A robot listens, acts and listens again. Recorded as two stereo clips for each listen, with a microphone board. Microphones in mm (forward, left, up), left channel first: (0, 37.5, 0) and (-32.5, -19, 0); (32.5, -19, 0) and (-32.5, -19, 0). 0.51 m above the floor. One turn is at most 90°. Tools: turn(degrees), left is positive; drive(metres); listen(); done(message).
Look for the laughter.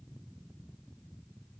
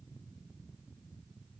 listen()
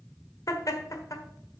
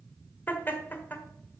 turn(degrees=55)
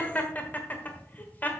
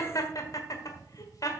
done("Found it: laughter, straight ahead.")